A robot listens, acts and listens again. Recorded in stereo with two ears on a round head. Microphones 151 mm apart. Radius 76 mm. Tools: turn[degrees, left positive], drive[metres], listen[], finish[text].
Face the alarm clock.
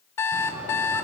Thought: The alarm clock: about 15° left or 165° left.
Action: turn[15]
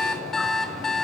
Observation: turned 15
Action: finish[Facing the alarm clock, 1 to 2 m away.]